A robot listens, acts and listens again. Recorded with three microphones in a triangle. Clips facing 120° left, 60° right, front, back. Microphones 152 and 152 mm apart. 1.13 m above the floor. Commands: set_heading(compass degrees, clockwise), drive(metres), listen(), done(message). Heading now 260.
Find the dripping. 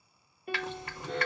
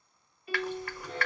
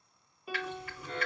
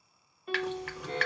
set_heading(70)
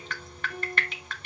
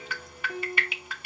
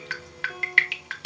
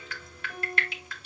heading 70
set_heading(50)
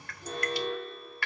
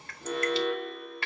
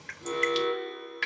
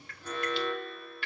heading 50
done("Found it: dripping, straight ahead, under 1 m away.")